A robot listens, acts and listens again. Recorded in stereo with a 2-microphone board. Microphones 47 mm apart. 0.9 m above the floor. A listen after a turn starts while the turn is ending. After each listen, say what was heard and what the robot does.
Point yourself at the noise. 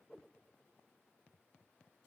Keep listening.
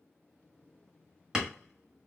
Turn 30° right.
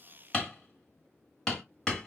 So it is at 15° left. Turn 15° left.
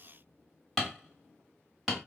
Facing the hammering, 1 to 2 m away.